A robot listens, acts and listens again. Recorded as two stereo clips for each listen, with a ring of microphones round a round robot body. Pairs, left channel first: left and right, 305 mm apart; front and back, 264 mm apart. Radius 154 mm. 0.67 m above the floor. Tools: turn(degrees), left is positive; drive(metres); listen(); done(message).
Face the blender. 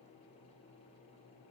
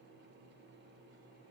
listen()
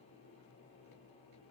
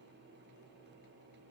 listen()
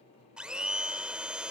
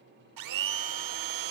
turn(degrees=-175)
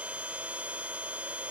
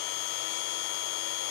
done("Found it: a blender, straight ahead.")